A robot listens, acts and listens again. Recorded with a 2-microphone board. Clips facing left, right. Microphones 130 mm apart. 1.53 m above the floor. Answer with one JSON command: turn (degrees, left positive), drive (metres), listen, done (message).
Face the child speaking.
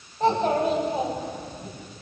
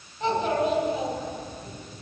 {"turn": 35}
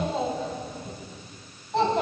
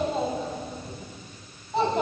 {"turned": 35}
{"done": "Found it: a child speaking, straight ahead, over 4 m away."}